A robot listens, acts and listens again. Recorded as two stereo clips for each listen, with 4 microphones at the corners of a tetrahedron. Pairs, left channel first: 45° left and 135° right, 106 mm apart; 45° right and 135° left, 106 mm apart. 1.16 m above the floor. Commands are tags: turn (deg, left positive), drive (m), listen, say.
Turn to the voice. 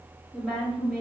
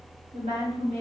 <turn deg="145"/>
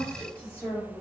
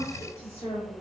<turn deg="-20"/>
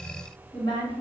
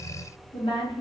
<say>Facing the woman speaking, 1 to 2 m away.</say>